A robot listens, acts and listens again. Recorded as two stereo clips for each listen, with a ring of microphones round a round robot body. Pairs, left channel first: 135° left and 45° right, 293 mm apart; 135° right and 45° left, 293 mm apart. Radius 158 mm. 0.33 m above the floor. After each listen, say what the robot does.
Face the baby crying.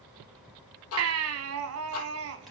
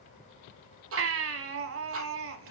Found it: a baby crying, straight ahead, 1 to 2 m away.